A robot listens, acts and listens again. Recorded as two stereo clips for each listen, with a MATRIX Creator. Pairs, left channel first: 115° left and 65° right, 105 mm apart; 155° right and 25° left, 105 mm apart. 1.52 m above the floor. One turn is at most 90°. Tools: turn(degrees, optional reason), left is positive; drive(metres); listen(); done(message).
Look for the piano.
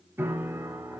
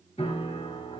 turn(degrees=-90, reason="The piano: 135° right.")
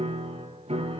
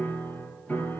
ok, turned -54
turn(degrees=-85, reason="The piano is now 85° right.")
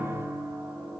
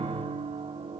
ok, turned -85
done("Facing the piano.")